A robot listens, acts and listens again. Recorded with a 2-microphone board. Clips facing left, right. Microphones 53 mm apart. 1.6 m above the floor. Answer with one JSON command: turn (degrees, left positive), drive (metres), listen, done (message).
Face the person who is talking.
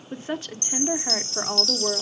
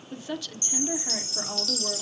{"turn": 35}
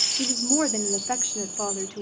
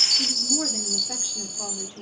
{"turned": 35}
{"turn": 110}
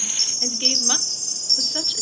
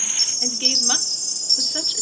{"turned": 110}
{"listen": true}
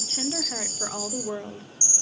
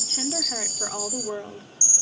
{"done": "Found it: a woman speaking, straight ahead."}